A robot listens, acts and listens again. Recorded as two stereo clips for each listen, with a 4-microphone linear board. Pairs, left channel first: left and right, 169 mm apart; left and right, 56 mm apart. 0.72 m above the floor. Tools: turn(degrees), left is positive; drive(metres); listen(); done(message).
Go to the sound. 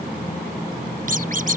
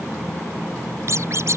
turn(degrees=-55)
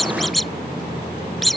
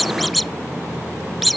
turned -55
drive(metres=1.0)
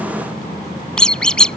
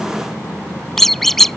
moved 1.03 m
drive(metres=1.0)
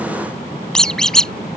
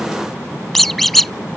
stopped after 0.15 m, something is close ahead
done("I am next to the squeak.")